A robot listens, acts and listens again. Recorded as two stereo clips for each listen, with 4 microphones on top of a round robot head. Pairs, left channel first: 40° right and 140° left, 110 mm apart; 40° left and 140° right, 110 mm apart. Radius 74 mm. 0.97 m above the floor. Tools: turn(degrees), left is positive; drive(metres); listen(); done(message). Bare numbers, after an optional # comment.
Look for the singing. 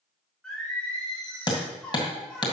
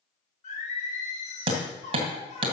# The singing: 40° left.
turn(40)
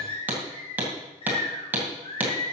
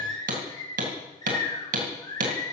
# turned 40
# The singing is now 10° right.
turn(-10)
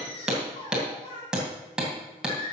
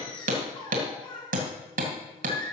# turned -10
done("Facing the singing.")